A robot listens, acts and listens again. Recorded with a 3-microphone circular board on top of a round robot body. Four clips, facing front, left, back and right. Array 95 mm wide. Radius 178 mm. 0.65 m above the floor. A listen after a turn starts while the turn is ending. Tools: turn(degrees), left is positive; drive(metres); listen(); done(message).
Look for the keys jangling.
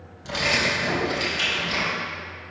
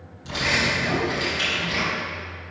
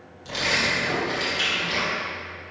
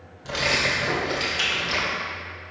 turn(degrees=-90)
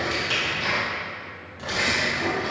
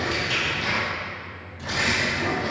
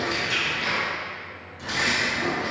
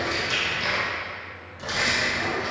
turn(degrees=-60)
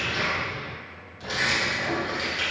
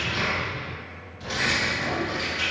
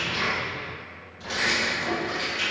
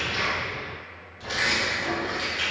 turn(degrees=-25)
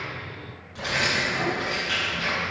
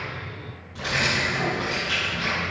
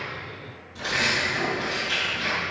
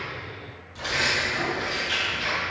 turn(degrees=15)
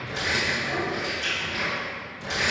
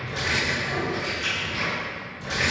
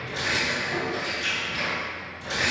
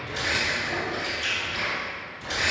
done("Facing the keys jangling.")